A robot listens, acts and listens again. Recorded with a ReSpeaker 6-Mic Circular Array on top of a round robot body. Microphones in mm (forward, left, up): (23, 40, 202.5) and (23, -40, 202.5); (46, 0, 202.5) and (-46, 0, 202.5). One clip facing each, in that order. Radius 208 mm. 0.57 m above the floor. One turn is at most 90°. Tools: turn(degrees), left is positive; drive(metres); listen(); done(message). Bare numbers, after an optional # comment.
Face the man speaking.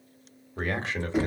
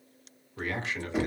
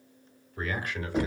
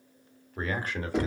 # The man speaking: 135° left.
turn(90)
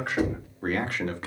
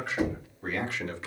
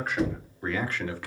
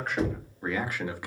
# The man speaking is now 110° left.
turn(90)
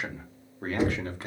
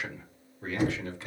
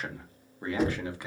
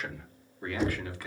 # The man speaking is now 65° left.
turn(65)
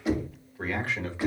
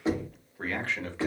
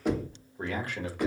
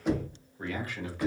# The man speaking is now 10° left.
turn(10)
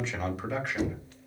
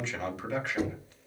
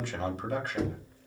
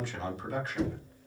done("Facing the man speaking.")